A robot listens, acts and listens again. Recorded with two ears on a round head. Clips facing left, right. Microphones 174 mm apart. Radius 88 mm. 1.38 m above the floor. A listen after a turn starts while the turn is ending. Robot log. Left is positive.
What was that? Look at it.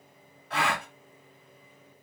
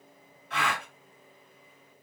note: The gasp: about 35° left or 145° left.
cmd yaw +35
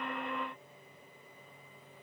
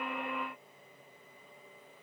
cmd idle
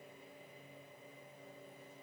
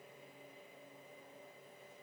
end: I heard a gasp, but can't make it out now. It was about straight ahead or 110° left.